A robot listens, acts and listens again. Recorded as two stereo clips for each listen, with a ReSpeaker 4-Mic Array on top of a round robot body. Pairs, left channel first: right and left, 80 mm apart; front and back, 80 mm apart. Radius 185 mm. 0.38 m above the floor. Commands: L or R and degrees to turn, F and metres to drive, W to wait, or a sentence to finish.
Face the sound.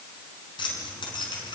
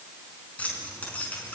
R70
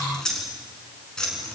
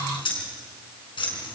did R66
R10
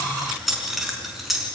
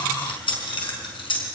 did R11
Found it: keys jangling, straight ahead.